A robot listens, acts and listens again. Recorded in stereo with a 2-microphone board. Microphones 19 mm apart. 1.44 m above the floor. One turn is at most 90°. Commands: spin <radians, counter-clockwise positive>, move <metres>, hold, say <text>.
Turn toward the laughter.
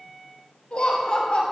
spin 1.22
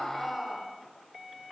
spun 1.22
say Found it: laughter, straight ahead, over 4 m away.